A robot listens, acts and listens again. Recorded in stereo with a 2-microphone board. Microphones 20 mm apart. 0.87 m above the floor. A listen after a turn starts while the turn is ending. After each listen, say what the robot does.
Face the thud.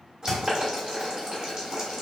Turn 30° right.
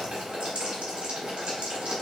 Keep listening.
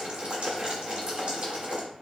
I heard a thud, but can't make it out now. It was about 25° left or 145° right.